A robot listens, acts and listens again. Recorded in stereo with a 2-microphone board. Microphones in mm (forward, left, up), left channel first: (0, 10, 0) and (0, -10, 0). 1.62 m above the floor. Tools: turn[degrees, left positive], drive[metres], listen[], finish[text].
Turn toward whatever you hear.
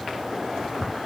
Action: listen[]
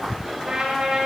Thought: The trumpet: about 55° right or 125° right.
Action: turn[-55]
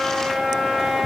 Thought: So it is at 70° right.
Action: turn[-70]
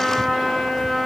Thought: The trumpet is now 20° left.
Action: turn[20]
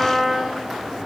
Thought: The trumpet is now 10° left.
Action: turn[10]
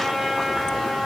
Action: finish[Found it: a trumpet, straight ahead, over 4 m away.]